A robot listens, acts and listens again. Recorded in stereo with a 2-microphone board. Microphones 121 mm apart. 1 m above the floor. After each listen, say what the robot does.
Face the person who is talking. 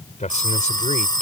Turn 90° left.
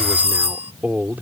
Turn 15° right.
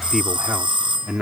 Facing the man speaking.